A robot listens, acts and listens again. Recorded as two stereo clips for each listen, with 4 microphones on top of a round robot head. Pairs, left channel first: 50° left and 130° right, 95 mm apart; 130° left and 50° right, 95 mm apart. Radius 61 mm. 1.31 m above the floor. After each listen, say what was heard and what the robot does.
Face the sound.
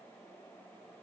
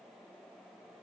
Keep listening.
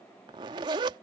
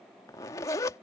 The zipper: 175° right. Turn 175° right.
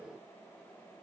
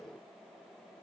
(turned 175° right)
Keep listening.
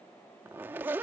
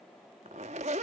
The zipper is now 60° right. Turn 60° right.
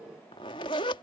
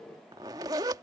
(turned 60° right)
Found it: a zipper, straight ahead.